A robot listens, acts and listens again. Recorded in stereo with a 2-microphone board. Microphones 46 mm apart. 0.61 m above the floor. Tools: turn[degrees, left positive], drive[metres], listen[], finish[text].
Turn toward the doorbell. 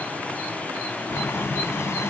Action: listen[]
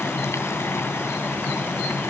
Action: listen[]
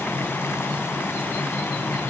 Action: finish[I can't make out a doorbell to turn to.]